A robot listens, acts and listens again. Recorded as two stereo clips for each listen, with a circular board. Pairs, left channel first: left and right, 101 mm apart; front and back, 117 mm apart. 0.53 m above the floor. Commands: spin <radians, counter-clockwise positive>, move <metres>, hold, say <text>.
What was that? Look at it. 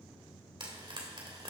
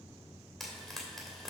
spin -1.48
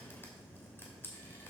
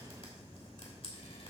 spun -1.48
spin 0.44
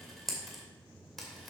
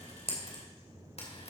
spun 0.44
say Facing the frying.